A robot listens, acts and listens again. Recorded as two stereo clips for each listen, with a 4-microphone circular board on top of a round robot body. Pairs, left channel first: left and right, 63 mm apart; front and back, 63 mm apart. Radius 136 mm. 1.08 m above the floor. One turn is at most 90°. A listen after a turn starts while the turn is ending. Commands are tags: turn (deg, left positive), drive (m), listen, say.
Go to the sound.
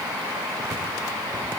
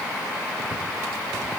<listen/>
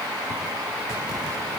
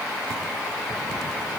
<listen/>
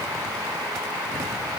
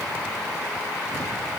<say>I can't make out anything to turn to.</say>